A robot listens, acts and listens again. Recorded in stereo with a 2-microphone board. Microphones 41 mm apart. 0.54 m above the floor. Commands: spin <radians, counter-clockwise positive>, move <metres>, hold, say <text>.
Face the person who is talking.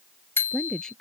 spin 0.26
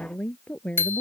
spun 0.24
spin 0.52
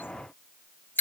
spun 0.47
hold
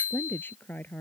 spin 2.27
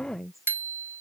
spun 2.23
say Facing the woman speaking.